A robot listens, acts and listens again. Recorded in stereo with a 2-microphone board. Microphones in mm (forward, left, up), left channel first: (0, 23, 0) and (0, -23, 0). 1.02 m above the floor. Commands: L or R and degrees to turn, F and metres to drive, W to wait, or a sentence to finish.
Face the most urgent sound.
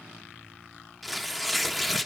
W
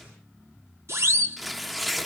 R90
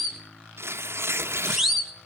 Found it: a siren, straight ahead.